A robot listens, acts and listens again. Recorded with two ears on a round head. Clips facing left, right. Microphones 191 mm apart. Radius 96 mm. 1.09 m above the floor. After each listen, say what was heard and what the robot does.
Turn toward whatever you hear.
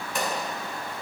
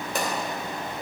The pop: about 35° right or 145° right. Turn 35° right.
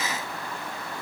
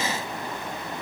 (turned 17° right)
Keep listening.
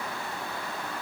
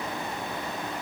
I heard a pop, but can't make it out now. It was about 15° right or 130° right.